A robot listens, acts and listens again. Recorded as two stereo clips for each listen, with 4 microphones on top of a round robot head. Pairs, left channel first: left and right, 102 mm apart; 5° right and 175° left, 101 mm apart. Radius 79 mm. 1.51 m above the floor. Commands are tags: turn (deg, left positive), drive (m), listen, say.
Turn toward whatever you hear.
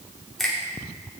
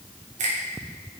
<turn deg="180"/>
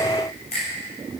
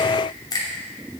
<turn deg="45"/>
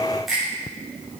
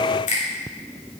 <say>Found it: a finger snap, straight ahead.</say>